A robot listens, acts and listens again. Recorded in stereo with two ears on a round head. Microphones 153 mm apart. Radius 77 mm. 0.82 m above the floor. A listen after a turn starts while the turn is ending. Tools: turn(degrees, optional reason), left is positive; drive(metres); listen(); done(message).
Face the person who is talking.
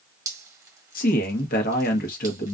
turn(degrees=50, reason="The man speaking: about 50° left or 130° left.")
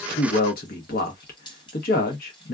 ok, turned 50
turn(degrees=65, reason="So it is at 65° left.")
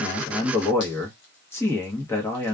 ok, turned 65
turn(degrees=15, reason="The man speaking is now 15° left.")
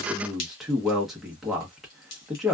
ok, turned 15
done("Facing the man speaking.")